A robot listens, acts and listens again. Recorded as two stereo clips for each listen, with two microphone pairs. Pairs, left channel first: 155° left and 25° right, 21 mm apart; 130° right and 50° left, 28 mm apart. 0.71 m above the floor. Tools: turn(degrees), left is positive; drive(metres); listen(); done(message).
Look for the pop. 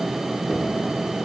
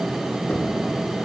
listen()
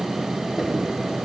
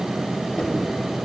listen()
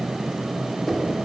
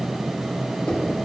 done("I can't make out a pop to turn to.")